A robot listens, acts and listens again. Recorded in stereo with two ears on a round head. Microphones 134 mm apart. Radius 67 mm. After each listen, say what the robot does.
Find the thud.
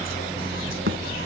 Turn 70° right.
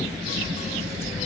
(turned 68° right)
Keep listening.
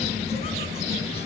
I heard a thud, but can't make it out now. It was about straight ahead or 40° right.